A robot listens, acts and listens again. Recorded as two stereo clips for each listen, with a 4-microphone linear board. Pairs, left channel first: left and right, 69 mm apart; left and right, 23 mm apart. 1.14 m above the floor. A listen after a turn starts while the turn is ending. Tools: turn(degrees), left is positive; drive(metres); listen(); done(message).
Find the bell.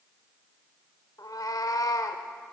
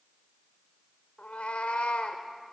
listen()
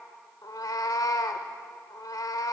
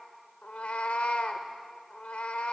listen()
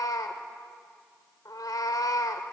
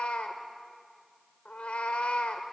done("I can't make out a bell, only a cat meowing.")